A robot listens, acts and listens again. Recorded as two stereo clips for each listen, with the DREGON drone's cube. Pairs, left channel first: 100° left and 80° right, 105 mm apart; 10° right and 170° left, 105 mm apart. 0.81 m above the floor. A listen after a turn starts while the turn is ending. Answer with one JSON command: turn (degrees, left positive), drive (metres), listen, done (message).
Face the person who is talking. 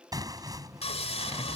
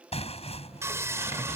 {"listen": true}
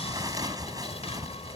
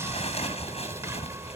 {"listen": true}
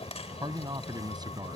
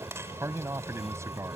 {"turn": -130}
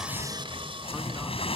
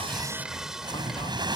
{"listen": true}
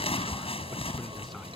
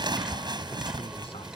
{"listen": true}
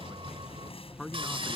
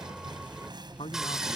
{"turn": 15}
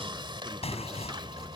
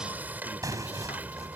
{"listen": true}
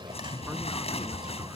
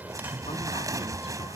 {"listen": true}
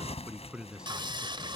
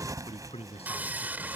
{"done": "Facing the man speaking."}